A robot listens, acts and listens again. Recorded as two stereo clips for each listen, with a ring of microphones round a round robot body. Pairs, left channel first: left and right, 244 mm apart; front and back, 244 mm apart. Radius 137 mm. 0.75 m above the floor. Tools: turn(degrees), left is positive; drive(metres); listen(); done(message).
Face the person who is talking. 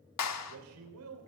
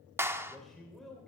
turn(degrees=-90)
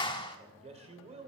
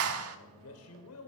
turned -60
turn(degrees=-30)
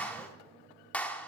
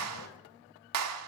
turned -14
turn(degrees=-15)
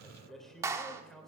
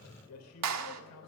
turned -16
done("Found it: a man speaking, straight ahead, 2 to 4 m away.")